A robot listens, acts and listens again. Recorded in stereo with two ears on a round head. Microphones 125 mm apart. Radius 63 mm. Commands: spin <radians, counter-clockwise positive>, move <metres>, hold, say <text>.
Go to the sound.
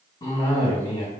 spin 0.44
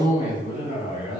spin 2.27
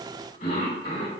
spin 0.87
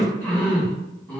spin 0.17
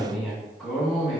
move 1.0
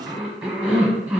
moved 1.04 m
spin -0.17
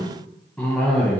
move 1.0
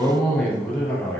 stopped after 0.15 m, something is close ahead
say I am next to the cough.